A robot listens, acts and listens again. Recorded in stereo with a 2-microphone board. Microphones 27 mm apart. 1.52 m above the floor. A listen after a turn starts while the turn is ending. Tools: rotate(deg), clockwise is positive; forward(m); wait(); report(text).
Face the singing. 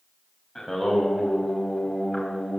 rotate(-30)
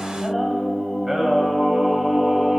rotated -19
rotate(15)
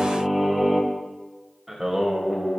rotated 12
rotate(10)
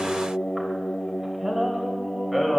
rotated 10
report("Found it: singing, straight ahead, 2 to 4 m away.")